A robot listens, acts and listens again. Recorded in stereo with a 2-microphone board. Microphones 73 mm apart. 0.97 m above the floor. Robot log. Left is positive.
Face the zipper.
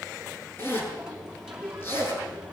note: The zipper: about 30° left or 150° left.
cmd yaw +30
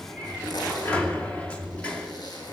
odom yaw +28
note: So it is at 125° left.
cmd yaw +125
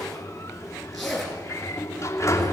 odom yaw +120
end: Facing the zipper.